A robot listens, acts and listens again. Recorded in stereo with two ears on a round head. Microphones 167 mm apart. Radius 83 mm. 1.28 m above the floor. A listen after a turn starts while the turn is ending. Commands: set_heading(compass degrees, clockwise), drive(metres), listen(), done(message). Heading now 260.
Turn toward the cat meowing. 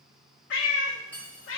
set_heading(190)
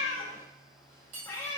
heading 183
set_heading(173)
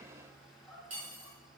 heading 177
done("Facing the cat meowing, 1 to 2 m away.")